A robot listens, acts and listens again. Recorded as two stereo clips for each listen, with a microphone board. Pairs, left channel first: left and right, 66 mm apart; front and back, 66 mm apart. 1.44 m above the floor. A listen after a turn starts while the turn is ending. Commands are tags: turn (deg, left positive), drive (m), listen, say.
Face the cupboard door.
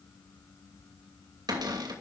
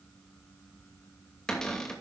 <turn deg="-80"/>
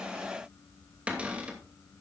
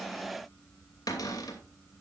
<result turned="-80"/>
<turn deg="-20"/>
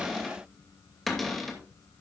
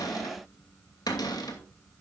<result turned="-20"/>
<say>Found it: a cupboard door, straight ahead.</say>